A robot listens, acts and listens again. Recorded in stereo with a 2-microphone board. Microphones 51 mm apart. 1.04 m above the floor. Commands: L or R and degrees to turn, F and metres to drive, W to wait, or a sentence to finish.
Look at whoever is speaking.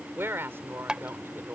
R50
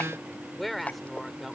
Found it: a woman speaking, straight ahead.